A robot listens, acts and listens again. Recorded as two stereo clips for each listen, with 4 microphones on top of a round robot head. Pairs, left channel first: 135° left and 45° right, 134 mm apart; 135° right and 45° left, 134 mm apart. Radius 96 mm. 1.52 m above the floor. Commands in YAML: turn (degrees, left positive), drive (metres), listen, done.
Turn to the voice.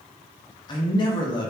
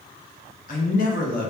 turn: -165
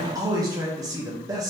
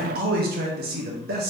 turn: 25
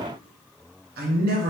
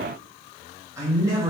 turn: -25
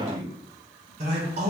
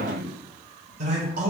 done: "Facing the man speaking."